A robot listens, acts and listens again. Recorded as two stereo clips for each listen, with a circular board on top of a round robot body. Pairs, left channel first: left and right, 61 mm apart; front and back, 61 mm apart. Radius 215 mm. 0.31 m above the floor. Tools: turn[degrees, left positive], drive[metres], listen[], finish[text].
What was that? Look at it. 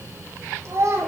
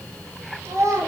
Thought: The child speaking: 135° right.
Action: turn[-135]
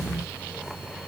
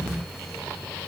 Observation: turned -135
Action: listen[]
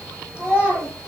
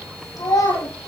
Thought: The child speaking is now 20° right.
Action: turn[-20]
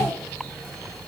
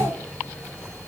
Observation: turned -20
Action: listen[]
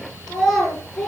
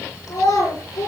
Action: finish[Facing the child speaking.]